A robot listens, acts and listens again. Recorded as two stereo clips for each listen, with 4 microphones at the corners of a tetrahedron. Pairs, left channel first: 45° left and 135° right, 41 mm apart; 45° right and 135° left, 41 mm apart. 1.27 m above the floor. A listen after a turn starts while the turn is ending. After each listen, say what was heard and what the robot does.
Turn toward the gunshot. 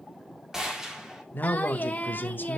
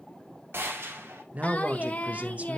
The gunshot: 150° left. Turn 150° left.
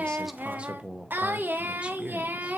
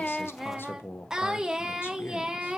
Facing where the gunshot came from. I can't hear it now.